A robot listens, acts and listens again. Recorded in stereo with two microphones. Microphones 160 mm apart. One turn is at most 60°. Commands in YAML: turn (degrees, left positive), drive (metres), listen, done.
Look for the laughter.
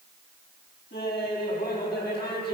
turn: 60
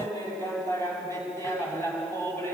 turn: 15
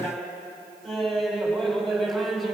done: "Found it: laughter, straight ahead."